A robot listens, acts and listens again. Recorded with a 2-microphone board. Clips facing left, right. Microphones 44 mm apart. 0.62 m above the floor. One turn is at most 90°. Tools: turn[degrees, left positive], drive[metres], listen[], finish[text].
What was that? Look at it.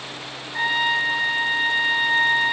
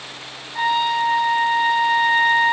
Thought: The trumpet: about 50° left or 130° left.
Action: turn[50]
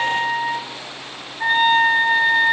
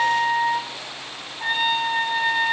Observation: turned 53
Thought: So it is at 75° left.
Action: turn[75]
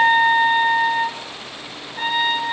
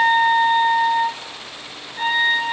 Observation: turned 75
Action: finish[Facing the trumpet.]